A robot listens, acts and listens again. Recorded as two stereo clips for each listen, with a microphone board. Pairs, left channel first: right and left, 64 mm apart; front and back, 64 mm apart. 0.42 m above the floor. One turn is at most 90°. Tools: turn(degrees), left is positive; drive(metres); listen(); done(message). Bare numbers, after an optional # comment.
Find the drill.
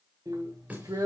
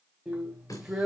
# The drill: 100° left.
turn(90)
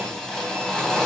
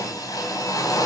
# The drill is now 10° right.
turn(-10)
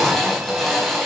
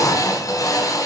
done("Found it: a drill, straight ahead, 2 to 4 m away.")